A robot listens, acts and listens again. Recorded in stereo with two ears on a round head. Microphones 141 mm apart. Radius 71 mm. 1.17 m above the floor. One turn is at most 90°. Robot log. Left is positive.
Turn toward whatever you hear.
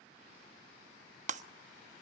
note: The breaking glass: about 50° right or 130° right.
cmd yaw -50
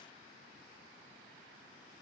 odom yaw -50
cmd idle
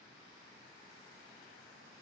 end: I heard breaking glass, but can't make it out now. It was about straight ahead or 80° right.